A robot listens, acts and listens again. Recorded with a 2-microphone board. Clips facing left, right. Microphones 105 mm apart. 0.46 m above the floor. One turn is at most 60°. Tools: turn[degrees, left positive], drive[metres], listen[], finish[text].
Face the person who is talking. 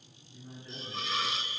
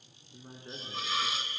Thought: The man speaking: about 55° right or 125° right.
Action: turn[-55]
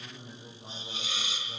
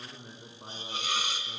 Thought: So it is at 65° right.
Action: turn[-60]
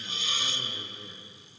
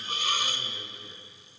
Action: finish[Found it: a man speaking, straight ahead.]